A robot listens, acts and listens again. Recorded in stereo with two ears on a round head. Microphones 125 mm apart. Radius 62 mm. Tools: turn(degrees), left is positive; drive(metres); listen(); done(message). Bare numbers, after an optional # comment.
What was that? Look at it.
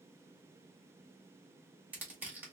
turn(-30)
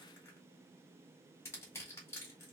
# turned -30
# So it is at 20° left.
turn(20)
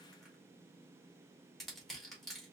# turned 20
done("Found it: crushing, straight ahead.")